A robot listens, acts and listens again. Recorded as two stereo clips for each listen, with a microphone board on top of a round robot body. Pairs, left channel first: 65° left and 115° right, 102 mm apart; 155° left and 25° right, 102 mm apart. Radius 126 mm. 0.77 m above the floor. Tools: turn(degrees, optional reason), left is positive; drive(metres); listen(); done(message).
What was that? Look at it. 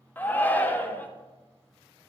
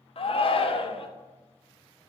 turn(degrees=140, reason="The shout: 140° left.")
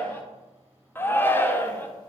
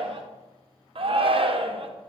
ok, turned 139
done("Found it: a shout, straight ahead.")